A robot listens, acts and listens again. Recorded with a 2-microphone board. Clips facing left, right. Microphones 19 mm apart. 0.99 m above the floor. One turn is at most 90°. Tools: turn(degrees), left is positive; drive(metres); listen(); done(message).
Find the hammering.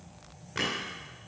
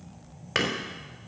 turn(degrees=-70)
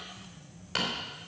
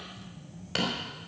done("Found it: hammering, straight ahead, 2 to 4 m away.")